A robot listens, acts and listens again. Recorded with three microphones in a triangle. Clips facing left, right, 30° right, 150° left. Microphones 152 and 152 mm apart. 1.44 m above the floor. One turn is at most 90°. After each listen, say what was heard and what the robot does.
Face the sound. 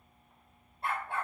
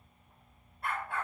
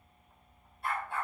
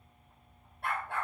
The dog barking: 150° left. Turn 90° left.
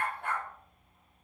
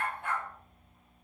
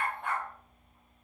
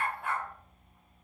The dog barking is now 65° left. Turn 65° left.
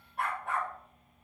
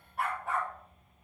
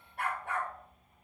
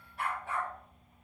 Found it: a dog barking, straight ahead, 2 to 4 m away.